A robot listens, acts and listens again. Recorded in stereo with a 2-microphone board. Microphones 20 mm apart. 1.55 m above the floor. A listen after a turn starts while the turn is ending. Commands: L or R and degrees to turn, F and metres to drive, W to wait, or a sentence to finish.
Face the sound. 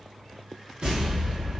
R60
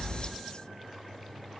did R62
W
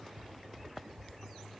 I heard an explosion, but can't make it out now. It was about straight ahead or 55° right.